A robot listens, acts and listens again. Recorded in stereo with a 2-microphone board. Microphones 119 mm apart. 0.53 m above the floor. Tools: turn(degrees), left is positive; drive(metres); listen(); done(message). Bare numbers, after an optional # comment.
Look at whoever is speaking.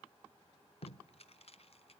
listen()
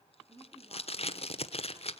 # The woman speaking: about 40° right or 140° right.
turn(-40)
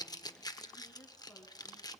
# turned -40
# So it is at 15° left.
turn(15)
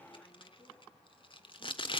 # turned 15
listen()
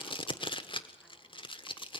listen()
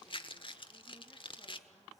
done("I heard a woman speaking from this way, but can't make it out now.")